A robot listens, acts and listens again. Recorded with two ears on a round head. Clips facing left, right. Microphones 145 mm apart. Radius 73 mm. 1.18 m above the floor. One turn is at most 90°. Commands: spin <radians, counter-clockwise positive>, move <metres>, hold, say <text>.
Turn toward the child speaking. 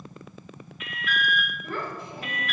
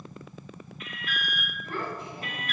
spin 1.22
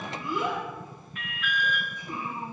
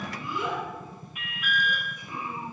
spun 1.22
spin 0.70
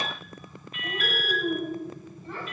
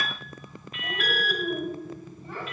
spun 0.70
say Facing the child speaking, over 4 m away.